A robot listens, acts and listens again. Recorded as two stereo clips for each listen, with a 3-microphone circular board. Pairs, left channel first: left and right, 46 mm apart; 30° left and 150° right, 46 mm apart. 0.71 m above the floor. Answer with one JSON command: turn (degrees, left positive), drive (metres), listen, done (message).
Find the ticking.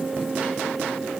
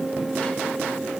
{"listen": true}
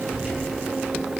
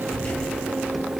{"listen": true}
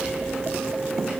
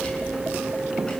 {"done": "I can't make out ticking to turn to."}